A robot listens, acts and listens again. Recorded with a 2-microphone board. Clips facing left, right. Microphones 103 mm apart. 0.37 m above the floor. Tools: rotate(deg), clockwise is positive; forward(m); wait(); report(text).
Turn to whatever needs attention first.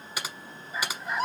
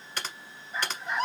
rotate(-30)
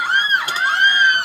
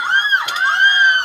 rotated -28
rotate(30)
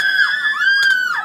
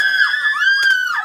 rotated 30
report("Found it: a scream, straight ahead, 2 to 4 m away.")